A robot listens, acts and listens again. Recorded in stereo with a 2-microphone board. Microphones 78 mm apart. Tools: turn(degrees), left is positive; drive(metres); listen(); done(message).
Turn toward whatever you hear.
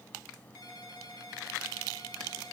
turn(degrees=55)
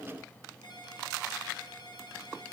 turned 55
turn(degrees=65)
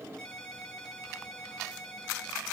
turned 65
turn(degrees=10)
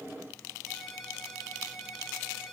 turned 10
done("Found it: a ringtone, straight ahead, over 4 m away.")